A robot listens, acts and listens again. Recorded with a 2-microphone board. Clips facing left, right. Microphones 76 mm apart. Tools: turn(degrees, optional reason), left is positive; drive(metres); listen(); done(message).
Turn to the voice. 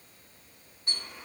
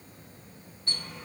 listen()
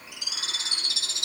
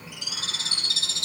listen()
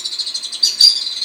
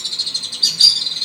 done("I can't make out anyone speaking to turn to.")